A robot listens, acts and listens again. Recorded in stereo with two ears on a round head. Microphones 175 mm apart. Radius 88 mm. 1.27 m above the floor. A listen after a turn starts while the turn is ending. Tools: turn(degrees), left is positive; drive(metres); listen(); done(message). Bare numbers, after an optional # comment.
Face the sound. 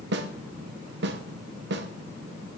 # The snare drum: about 65° right or 115° right.
turn(-65)
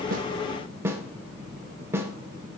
# So it is at 15° right.
turn(-15)
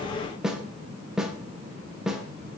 done("Facing the snare drum.")